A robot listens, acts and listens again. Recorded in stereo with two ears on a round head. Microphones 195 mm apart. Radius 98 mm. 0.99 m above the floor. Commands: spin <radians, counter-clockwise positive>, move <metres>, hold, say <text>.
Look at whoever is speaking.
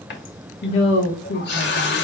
spin 0.96
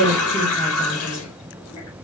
spin 0.17
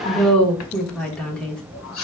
say Facing the woman speaking, 1 to 2 m away.